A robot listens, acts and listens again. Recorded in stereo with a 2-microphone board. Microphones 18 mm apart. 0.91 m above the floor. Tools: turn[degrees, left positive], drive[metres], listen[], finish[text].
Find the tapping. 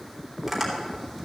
Action: turn[30]
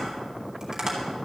Thought: So it is at 30° right.
Action: turn[-30]
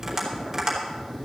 Thought: The tapping is now 15° right.
Action: turn[-15]
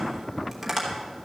Action: finish[Found it: tapping, straight ahead.]